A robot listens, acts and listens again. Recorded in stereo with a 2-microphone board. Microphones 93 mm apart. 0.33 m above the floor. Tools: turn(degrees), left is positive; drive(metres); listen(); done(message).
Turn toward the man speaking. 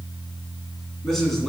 turn(degrees=30)
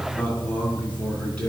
turn(degrees=30)
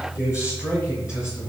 turn(degrees=155)
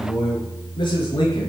turn(degrees=55)
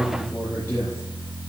turn(degrees=20)
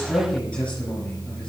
turn(degrees=10)
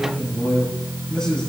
done("Found it: a man speaking, straight ahead.")